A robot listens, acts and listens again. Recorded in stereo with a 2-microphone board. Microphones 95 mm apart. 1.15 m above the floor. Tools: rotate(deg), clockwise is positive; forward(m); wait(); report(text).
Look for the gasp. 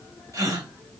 rotate(40)
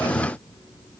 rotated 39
wait()
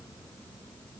report("I heard a gasp, but can't make it out now. It was about straight ahead or 105° right.")